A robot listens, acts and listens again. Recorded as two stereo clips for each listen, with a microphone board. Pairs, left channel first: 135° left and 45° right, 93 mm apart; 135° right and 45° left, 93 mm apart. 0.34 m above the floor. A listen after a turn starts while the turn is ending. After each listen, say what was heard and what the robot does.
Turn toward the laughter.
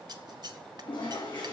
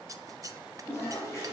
Keep listening.
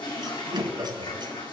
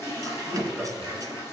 The laughter: 45° right. Turn 45° right.
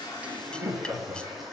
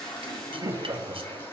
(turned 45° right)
The laughter is now 20° left. Turn 20° left.
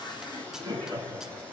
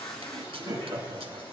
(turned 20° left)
Facing the laughter, over 4 m away.